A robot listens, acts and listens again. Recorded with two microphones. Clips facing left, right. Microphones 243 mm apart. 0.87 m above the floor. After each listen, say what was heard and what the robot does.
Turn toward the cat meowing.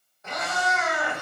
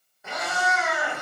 Turn 30° right.
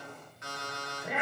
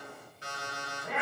So it is at 20° left. Turn 20° left.
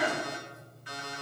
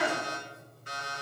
Facing the cat meowing.